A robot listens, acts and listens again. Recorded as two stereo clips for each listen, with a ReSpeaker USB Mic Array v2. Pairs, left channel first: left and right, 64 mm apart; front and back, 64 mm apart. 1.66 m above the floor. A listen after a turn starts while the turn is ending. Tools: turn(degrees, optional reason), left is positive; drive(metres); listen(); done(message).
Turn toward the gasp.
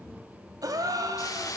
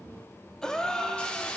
turn(degrees=-80, reason="The gasp: 80° right.")
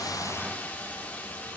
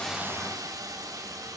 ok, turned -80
done("I heard a gasp from this way, but can't make it out now.")